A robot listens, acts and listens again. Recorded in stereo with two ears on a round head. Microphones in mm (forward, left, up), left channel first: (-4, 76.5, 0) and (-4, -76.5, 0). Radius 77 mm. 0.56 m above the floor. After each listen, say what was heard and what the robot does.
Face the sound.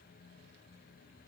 Keep listening.
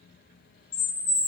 The bird: about 60° left or 120° left. Turn 60° left.
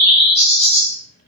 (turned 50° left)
So it is at 40° left. Turn 40° left.
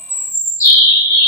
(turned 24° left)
The bird is now 20° left. Turn 20° left.
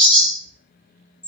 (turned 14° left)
Facing the bird.